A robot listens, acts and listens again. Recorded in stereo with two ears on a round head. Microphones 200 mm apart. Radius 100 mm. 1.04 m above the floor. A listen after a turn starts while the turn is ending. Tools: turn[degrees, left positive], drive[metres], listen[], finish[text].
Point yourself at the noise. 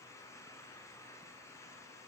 Action: listen[]
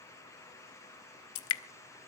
Thought: The dripping: about 70° left or 110° left.
Action: turn[70]
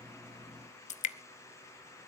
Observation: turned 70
Thought: So it is at 35° left.
Action: turn[35]
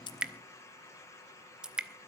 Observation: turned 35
Action: finish[Facing the dripping.]